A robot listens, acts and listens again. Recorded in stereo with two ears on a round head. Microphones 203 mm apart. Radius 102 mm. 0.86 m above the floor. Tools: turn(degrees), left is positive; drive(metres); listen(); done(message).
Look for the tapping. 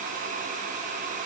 listen()
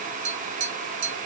turn(degrees=-30)
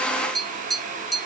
done("Found it: tapping, straight ahead.")